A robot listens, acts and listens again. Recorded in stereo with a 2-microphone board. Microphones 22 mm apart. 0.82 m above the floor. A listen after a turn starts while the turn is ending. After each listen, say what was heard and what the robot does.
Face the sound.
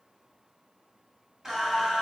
The singing: about 25° right or 155° right. Turn 25° right.
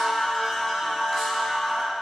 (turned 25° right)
Found it: singing, straight ahead, 2 to 4 m away.